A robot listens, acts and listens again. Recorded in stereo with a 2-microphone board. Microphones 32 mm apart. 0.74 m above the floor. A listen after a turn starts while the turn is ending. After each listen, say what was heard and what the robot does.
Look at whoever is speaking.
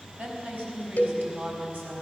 The woman speaking: about 60° right or 120° right. Turn 60° right.
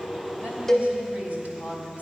So it is at 60° right. Turn 60° right.
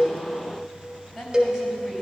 The woman speaking is now 20° right. Turn 20° right.
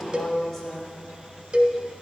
Facing the woman speaking.